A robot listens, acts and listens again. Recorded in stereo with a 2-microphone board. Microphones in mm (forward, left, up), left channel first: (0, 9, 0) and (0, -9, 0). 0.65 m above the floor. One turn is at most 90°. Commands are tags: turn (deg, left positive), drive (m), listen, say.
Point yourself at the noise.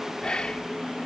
<turn deg="55"/>
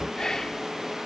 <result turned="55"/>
<turn deg="40"/>
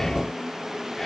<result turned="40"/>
<listen/>
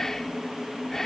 <turn deg="30"/>
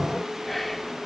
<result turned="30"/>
<turn deg="10"/>
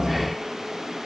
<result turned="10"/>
<listen/>
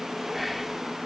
<say>Facing the whispering.</say>